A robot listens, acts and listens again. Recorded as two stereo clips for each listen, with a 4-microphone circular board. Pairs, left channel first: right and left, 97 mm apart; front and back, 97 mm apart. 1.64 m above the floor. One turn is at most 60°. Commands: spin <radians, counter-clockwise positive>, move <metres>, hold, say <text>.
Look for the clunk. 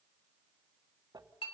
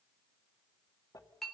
hold
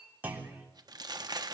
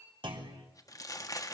spin 1.05
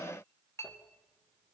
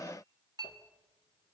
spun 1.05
spin 1.05
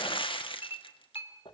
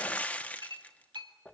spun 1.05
spin 0.70
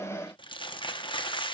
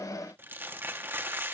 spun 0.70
say I heard a clunk from this way, but can't make it out now.